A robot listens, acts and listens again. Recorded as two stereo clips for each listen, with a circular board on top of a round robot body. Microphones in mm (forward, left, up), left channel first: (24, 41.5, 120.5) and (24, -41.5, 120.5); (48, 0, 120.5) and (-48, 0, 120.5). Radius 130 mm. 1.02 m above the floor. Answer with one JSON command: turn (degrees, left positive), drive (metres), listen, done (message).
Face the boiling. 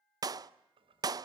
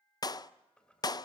{"turn": -80}
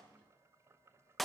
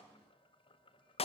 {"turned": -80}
{"turn": -30}
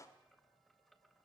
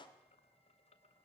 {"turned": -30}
{"done": "Facing the boiling."}